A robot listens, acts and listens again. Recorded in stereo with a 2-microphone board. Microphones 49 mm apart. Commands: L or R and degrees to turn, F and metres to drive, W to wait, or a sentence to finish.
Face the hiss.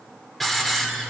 L30
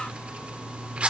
R30
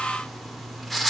Found it: a hiss, straight ahead, 1 to 2 m away.